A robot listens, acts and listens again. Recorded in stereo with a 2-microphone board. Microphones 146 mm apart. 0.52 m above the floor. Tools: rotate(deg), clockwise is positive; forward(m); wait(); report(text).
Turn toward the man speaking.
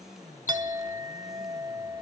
wait()
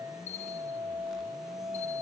wait()
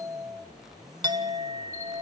report("I can't make out a man speaking, only a bell and a clink.")